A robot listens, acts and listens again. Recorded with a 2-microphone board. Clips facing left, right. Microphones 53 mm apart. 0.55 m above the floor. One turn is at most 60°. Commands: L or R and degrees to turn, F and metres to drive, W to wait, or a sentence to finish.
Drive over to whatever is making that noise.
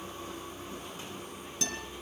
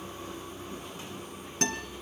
R45
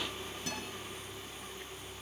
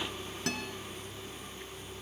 R60
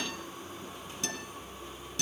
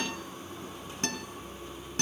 R45
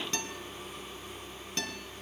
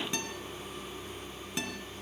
R10
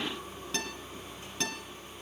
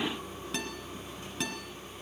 F1.0
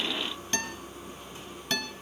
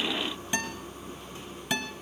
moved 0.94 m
R15
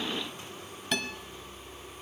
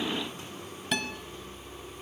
F1.0
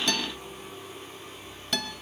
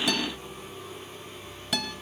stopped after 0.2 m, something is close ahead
I am next to the guitar.